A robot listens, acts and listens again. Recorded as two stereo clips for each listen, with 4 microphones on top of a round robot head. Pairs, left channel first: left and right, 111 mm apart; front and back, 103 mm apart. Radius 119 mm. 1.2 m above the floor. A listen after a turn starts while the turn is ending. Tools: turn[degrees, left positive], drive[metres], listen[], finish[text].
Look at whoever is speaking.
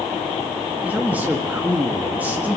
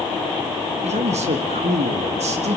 Thought: The man speaking: 170° right.
Action: turn[-170]
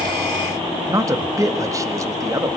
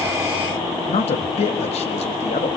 Thought: The man speaking is now 30° right.
Action: turn[-30]
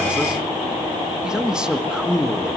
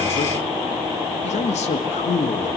Action: finish[Facing the man speaking.]